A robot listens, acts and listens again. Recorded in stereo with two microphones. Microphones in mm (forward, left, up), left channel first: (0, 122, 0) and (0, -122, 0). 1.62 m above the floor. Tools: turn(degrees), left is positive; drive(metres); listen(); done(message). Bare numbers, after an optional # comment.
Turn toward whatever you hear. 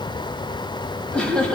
turn(30)
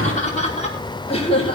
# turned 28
# So it is at 155° left.
turn(155)
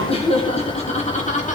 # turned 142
# The laughter is now 30° left.
turn(30)
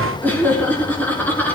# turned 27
done("Found it: laughter, straight ahead.")